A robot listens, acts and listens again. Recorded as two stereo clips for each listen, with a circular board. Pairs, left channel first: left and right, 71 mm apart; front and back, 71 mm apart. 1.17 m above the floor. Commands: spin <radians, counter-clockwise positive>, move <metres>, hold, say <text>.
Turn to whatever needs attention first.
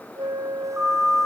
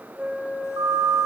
spin -2.97
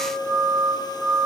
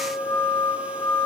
spin -0.26
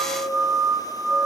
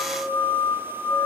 say Found it: a siren, straight ahead.